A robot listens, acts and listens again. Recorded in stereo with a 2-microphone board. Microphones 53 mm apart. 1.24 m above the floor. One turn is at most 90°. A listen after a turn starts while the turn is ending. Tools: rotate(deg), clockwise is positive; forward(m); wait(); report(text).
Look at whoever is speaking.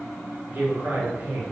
rotate(45)
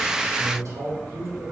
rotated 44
rotate(90)
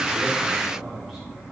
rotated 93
report("Found it: a man speaking, straight ahead, 1 to 2 m away.")